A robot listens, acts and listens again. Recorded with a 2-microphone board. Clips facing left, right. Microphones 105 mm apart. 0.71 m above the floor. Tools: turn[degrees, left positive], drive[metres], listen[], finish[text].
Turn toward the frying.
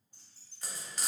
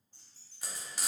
Action: turn[-30]
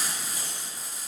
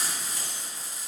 Thought: So it is at 15° left.
Action: turn[15]
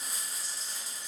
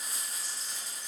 Action: finish[Facing the frying.]